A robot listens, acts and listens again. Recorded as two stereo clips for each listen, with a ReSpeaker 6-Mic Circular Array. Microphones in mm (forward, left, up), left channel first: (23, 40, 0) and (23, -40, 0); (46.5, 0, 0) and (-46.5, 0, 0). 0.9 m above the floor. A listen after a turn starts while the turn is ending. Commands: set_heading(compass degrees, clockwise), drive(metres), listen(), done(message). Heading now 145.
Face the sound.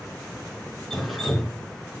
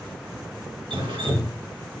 set_heading(325)
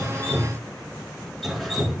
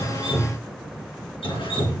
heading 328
done("Facing the dripping, 2 to 4 m away.")